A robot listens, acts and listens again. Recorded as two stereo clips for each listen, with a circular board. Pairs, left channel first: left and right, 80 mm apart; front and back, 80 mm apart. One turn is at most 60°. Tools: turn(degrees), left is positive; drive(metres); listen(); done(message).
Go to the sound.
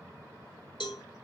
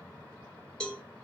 turn(degrees=60)
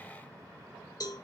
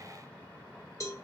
turn(degrees=50)
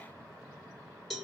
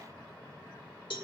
drive(metres=1.0)
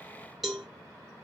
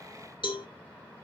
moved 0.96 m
drive(metres=1.0)
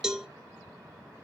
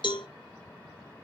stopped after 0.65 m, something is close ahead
turn(degrees=-10)
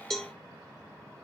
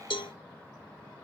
done("Arrived at the cowbell, straight ahead.")